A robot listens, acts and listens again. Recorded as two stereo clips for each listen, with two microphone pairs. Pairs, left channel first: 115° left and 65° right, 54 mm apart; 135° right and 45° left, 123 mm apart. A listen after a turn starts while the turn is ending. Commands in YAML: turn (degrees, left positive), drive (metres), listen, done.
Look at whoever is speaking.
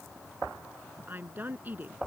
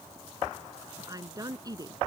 turn: -10
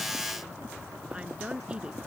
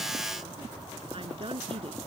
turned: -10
done: "Found it: a woman speaking, straight ahead."